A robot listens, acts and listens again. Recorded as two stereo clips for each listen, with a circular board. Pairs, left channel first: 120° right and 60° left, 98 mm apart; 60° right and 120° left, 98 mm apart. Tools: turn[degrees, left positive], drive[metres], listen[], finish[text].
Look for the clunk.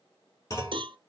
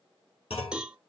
Thought: The clunk: 60° right.
Action: turn[-60]
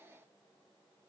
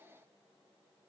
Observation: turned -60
Action: finish[Facing where the clunk came from. I can't hear it now.]